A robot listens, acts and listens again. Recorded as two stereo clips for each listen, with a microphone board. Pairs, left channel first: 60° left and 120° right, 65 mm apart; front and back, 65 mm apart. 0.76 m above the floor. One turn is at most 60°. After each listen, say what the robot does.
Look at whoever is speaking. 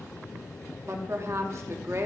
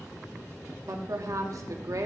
Turn 60° right.
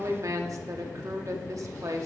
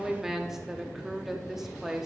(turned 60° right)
Turn 60° right.
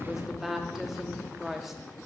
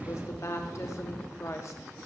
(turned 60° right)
Turn 35° right.
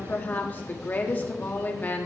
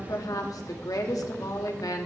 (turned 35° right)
Found it: a woman speaking, straight ahead, 1 to 2 m away.